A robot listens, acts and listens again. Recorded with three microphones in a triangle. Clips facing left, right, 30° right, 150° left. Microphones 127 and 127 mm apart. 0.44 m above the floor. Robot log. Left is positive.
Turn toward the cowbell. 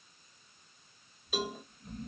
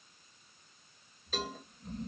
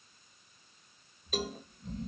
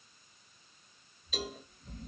note: The cowbell: 10° left.
cmd yaw +10
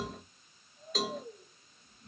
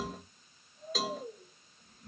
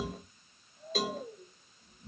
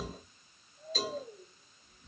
end: Facing the cowbell, under 1 m away.